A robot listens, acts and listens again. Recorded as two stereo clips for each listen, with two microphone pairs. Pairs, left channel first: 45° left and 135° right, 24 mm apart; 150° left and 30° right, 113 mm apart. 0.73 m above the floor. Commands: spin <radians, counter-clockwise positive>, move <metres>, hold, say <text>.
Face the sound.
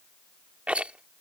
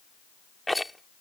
spin -2.09
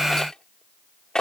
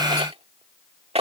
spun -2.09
spin -0.17
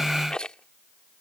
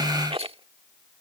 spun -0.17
say Facing the rattle.